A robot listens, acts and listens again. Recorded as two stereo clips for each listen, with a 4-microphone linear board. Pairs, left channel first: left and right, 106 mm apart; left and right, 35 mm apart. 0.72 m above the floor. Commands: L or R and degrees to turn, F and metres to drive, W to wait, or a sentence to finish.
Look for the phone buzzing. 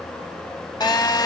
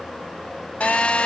L40
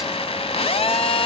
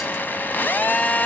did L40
L95
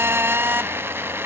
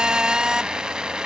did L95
R25
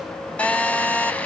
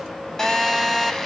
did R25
L15
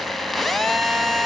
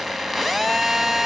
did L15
Facing the phone buzzing, under 1 m away.